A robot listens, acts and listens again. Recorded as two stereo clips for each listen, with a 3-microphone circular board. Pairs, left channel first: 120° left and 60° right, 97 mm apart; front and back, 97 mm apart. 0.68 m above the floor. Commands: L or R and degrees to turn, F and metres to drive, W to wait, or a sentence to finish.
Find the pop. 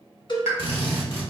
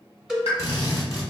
Facing the pop.